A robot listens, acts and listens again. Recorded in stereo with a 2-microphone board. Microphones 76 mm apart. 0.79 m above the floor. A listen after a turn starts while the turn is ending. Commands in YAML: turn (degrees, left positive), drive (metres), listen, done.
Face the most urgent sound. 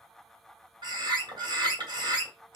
listen: true
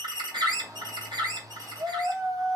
turn: -45
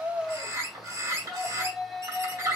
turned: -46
done: "Found it: a shout, straight ahead."